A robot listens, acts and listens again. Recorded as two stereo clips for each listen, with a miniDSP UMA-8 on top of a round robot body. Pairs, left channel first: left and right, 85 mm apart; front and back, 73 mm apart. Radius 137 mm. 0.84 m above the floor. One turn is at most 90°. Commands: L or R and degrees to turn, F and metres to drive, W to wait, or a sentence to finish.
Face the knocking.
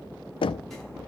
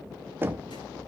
L90
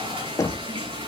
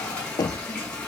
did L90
L35
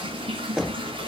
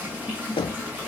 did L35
Facing the knocking.